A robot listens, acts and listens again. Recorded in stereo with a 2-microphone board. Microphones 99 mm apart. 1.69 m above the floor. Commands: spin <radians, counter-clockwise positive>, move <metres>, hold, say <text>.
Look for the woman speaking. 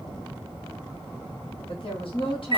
spin 1.05
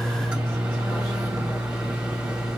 hold
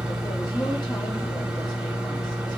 hold
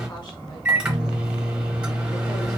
say I heard a woman speaking, but can't make it out now. It was about straight ahead or 60° left.